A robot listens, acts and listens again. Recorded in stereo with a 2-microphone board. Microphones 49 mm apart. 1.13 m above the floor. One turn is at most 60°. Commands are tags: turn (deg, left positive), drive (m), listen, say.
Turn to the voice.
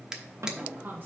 <turn deg="-40"/>
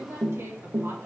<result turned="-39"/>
<turn deg="-60"/>
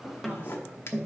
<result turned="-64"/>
<turn deg="-30"/>
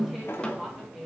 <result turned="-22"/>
<turn deg="-10"/>
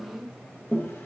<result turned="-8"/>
<say>Found it: a woman speaking, straight ahead, 1 to 2 m away.</say>